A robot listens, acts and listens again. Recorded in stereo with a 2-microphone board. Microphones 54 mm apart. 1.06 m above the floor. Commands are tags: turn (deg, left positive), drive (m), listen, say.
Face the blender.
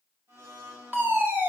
<turn deg="-50"/>
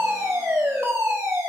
<listen/>
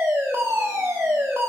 <listen/>
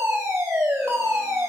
<say>I heard a blender, but can't make it out now. It was about straight ahead or 80° right.</say>